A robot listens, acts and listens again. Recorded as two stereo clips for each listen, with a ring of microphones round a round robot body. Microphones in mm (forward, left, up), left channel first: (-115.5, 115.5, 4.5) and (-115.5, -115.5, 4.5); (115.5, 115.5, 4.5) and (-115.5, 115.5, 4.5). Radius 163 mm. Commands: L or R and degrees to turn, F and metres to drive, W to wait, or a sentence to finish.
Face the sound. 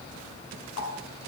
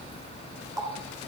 L105
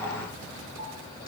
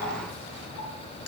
W
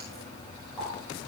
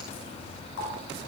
L10
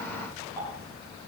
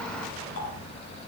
Facing the running tap, over 4 m away.